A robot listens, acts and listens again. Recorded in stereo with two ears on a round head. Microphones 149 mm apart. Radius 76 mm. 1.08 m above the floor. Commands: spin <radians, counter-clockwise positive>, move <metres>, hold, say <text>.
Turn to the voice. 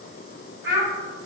spin -1.13
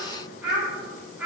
say Facing the child speaking, 1 to 2 m away.